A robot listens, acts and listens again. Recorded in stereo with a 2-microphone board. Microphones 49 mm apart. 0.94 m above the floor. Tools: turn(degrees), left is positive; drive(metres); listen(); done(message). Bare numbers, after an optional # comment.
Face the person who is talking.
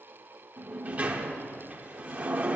listen()
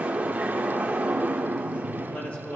# The man speaking: about 35° left or 145° left.
turn(35)
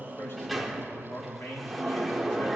# So it is at 110° left.
turn(110)
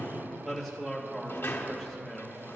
done("Found it: a man speaking, straight ahead.")